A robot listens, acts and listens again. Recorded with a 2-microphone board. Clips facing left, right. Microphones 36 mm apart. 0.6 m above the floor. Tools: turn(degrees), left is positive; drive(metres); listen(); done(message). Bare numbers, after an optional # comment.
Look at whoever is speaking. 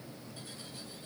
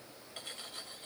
listen()
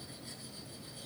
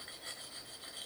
listen()
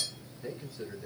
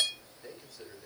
turn(30)
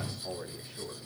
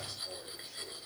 # So it is at 140° left.
turn(140)
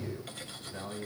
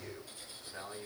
done("Facing the man speaking, 2 to 4 m away.")